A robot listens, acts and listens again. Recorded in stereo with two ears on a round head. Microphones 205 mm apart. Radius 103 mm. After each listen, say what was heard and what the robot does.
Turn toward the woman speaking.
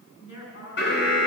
The woman speaking: about 55° left or 125° left. Turn 55° left.
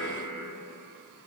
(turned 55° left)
Keep listening.
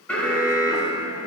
Keep listening.
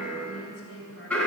So it is at 55° left. Turn 55° left.
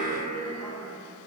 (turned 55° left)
Keep listening.
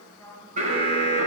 Facing the woman speaking, over 4 m away.